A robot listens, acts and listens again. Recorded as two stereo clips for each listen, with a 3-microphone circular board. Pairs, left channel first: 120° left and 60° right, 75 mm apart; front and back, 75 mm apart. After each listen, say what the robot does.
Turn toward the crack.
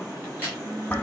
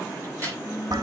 Turn 125° right.
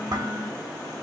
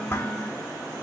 I heard a crack from this way, but can't make it out now.